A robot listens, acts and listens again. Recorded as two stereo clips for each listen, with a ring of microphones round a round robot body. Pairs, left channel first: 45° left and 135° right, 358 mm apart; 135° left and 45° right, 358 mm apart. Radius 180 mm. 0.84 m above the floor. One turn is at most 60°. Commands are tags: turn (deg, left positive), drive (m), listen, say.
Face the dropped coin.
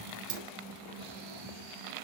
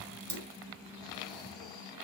<turn deg="-60"/>
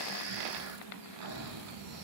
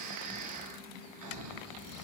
<turn deg="-45"/>
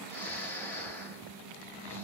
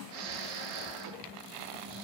<say>Facing where the dropped coin came from. I can't hear it now.</say>